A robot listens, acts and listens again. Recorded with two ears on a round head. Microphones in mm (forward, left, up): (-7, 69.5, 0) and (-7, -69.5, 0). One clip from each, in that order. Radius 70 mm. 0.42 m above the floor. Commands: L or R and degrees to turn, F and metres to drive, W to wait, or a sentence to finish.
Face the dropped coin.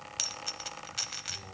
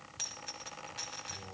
L65
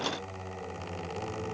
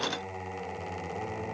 W
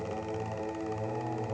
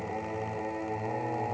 I heard a dropped coin, but can't make it out now. It was about straight ahead or 50° left.